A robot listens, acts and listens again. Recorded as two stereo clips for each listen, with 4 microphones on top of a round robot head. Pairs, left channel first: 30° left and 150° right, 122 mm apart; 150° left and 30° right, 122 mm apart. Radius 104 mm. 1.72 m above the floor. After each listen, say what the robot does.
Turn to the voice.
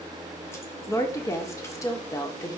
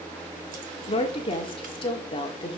Turn 100° left.
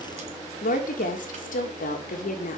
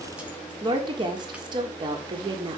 Turn 25° left.
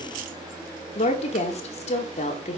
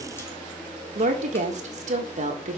Facing the woman speaking.